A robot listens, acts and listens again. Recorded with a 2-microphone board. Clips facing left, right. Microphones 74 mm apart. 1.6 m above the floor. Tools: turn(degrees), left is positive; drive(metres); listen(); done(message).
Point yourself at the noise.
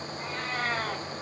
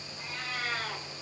turn(degrees=40)
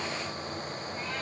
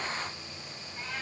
listen()
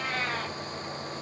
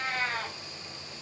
done("Found it: a cat meowing, straight ahead.")